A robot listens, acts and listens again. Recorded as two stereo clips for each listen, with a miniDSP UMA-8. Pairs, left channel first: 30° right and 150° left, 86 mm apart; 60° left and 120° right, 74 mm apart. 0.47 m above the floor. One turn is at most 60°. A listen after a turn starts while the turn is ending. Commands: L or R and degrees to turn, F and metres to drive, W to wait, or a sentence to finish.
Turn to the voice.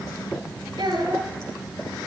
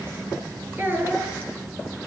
L60
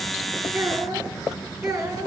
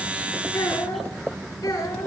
L60
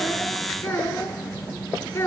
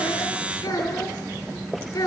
L30
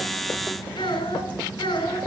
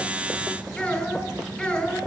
R15
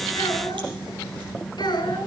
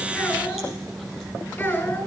Facing the child speaking.